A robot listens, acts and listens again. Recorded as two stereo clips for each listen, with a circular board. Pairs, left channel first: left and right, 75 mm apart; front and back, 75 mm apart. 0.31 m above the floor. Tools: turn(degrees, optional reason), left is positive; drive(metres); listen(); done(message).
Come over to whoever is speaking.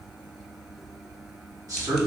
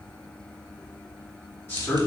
turn(degrees=-60, reason="The man speaking: 60° right.")
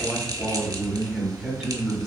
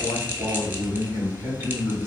drive(metres=1.0)
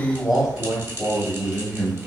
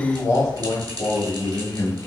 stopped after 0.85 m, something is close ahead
done("Arrived at the man speaking, straight ahead.")